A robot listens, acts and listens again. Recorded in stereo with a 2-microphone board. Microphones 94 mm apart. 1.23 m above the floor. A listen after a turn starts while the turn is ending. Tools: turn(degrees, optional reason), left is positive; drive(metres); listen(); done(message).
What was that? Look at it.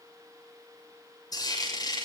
turn(degrees=45, reason="The frying: about 45° left or 135° left.")
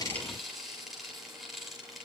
done("Found it: frying, straight ahead.")